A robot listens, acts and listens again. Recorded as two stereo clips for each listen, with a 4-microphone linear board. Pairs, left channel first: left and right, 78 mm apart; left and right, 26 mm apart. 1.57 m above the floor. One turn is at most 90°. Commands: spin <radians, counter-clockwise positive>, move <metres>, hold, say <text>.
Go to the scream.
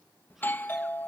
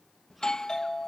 hold
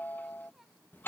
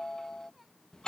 hold
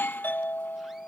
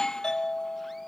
say I can't make out a scream to turn to.